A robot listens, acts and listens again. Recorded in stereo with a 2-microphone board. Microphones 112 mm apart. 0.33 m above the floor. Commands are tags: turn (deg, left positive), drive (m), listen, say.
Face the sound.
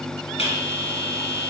<turn deg="55"/>
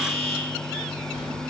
<turn deg="70"/>
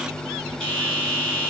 <say>Facing the bell, 2 to 4 m away.</say>